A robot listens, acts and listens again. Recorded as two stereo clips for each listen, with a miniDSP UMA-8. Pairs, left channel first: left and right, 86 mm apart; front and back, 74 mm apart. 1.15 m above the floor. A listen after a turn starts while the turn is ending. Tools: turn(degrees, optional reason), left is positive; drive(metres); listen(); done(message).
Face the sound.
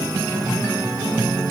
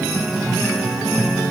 listen()
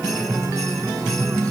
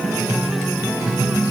listen()
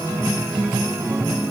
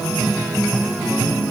done("I can't make out anything.")